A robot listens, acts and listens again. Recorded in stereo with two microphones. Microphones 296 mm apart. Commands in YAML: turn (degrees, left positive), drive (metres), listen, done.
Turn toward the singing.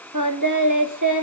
turn: -90
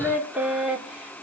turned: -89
done: "Facing the singing, 2 to 4 m away."